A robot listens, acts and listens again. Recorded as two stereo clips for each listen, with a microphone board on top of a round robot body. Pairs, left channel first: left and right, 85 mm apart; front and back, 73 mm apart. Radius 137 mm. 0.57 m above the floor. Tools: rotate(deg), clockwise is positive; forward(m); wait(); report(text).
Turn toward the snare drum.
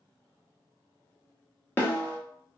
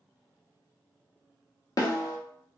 rotate(-25)
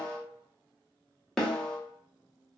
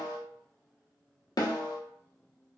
report("Found it: a snare drum, straight ahead.")